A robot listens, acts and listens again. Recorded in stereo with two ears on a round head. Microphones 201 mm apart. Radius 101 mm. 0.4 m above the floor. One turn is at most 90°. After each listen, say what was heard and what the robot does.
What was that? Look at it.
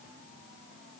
Keep listening.
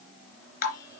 The dripping: about 45° left or 135° left. Turn 45° left.
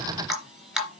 Facing the dripping, 2 to 4 m away.